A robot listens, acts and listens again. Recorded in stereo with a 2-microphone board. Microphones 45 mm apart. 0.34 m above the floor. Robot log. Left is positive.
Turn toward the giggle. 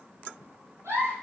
cmd yaw -90
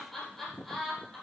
end: Found it: a giggle, straight ahead.